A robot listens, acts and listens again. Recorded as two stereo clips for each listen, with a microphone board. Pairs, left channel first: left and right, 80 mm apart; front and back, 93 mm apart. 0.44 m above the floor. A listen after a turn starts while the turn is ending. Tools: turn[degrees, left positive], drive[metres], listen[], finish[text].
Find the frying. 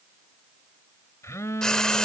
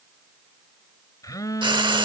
Thought: The frying: 170° left.
Action: turn[170]
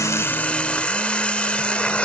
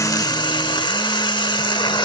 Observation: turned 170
Thought: The frying is now 15° left.
Action: turn[15]
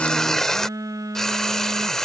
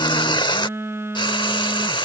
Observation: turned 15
Action: finish[Facing the frying.]